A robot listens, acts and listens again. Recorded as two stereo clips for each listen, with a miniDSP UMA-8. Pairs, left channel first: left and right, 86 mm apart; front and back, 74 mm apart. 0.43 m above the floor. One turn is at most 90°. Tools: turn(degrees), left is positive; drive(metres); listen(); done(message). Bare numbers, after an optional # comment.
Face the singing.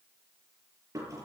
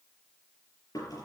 listen()
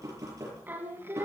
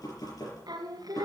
# The singing: 150° right.
turn(-90)
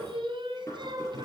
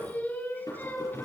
# The singing is now 60° right.
turn(-60)
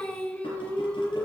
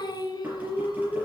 # The singing is now 25° left.
turn(25)
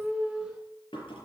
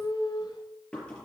done("Facing the singing, 2 to 4 m away.")